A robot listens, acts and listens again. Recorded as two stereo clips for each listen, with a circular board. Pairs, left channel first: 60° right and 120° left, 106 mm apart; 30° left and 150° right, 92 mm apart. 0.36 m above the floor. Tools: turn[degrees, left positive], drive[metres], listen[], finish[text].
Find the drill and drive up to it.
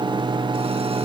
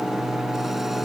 Action: listen[]
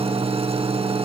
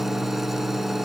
Action: listen[]
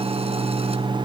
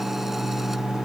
Action: finish[I can't make out a drill to turn to.]